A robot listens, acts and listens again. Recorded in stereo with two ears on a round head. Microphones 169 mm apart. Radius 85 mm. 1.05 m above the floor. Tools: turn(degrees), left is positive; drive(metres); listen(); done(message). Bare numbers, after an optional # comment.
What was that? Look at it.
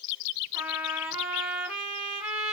turn(-30)
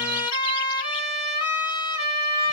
# So it is at 25° left.
turn(25)
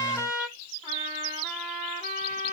# The trumpet is now 15° left.
turn(15)
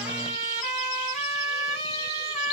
done("Found it: a trumpet, straight ahead.")